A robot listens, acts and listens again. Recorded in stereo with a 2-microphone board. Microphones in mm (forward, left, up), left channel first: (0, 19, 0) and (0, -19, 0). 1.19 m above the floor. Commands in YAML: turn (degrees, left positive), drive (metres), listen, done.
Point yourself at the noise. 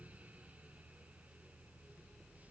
listen: true
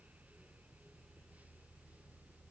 listen: true
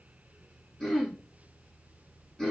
turn: 30
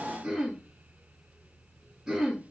turn: -15
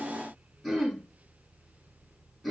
done: "Facing the throat clearing."